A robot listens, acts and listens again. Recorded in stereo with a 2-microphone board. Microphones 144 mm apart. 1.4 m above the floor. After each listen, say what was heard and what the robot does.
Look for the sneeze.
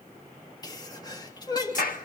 The sneeze: about 30° left or 150° left. Turn 30° left.
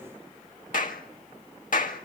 Keep listening.
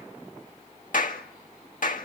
I heard a sneeze, but can't make it out now. It was about straight ahead or 120° left.